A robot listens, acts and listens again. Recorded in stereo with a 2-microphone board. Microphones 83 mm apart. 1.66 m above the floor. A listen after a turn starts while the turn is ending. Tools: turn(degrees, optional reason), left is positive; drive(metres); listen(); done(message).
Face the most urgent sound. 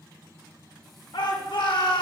turn(degrees=75, reason="The shout: about 75° left or 105° left.")
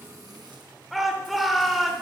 done("Facing the shout, 1 to 2 m away.")